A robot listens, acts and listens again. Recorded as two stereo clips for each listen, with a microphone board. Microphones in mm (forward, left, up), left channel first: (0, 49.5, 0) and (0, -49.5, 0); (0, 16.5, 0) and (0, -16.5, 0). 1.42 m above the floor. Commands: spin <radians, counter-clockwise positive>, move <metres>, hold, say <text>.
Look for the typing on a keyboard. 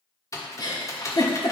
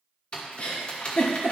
spin 0.52
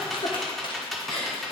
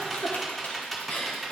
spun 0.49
say Found it: typing on a keyboard, straight ahead, 1 to 2 m away.